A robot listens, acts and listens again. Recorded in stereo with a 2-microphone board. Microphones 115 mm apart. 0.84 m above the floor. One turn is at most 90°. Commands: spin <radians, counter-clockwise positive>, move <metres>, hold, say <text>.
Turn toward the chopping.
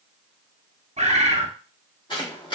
spin 0.79
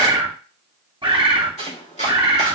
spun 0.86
spin 1.48
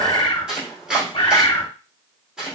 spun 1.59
say Facing the chopping.